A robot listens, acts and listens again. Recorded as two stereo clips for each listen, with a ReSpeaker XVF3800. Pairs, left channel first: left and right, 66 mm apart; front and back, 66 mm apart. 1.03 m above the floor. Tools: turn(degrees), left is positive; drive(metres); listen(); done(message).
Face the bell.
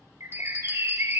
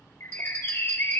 turn(degrees=145)
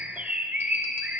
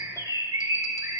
listen()
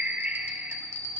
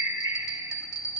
turn(degrees=35)
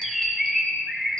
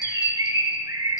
listen()
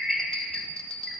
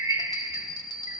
turn(degrees=15)
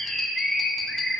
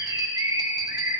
listen()
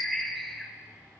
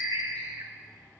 listen()
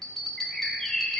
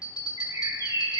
done("Found it: a bell, straight ahead.")